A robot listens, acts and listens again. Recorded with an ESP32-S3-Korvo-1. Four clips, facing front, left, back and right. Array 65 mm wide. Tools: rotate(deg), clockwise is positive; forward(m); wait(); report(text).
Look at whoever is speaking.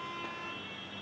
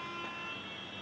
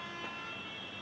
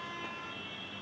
wait()
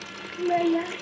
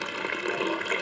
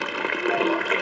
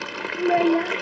rotate(75)
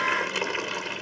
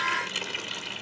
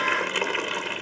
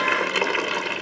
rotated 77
wait()
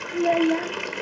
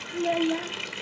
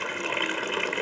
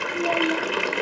report("Found it: a child speaking, straight ahead.")